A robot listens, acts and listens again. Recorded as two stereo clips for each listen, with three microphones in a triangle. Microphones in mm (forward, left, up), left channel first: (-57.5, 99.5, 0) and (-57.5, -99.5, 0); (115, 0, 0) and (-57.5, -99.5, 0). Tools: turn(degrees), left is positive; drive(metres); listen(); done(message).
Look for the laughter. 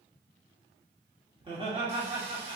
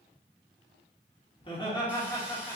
turn(degrees=-40)
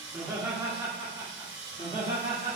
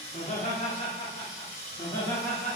turn(degrees=-50)
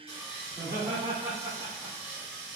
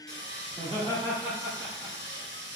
turn(degrees=-20)
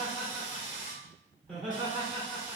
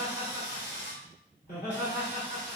done("Facing the laughter, 1 to 2 m away.")